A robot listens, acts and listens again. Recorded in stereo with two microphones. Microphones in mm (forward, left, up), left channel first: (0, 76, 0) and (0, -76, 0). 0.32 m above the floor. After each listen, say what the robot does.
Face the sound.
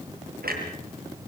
Turn 90° right.
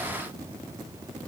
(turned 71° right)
Turn 20° right.
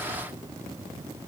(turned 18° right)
Facing where the clunk came from. I can't hear it now.